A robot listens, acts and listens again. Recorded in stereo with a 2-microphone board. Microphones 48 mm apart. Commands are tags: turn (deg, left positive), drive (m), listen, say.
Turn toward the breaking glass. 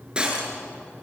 <turn deg="-20"/>
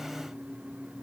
<listen/>
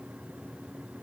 <say>I heard breaking glass, but can't make it out now. It was about straight ahead or 140° right.</say>